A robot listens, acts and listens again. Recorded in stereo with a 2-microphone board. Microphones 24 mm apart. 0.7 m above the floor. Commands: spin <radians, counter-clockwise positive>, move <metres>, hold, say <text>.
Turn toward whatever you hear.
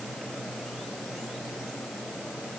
hold
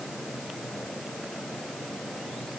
hold
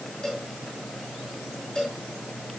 spin 0.70
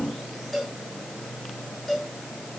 say Facing the cowbell, over 4 m away.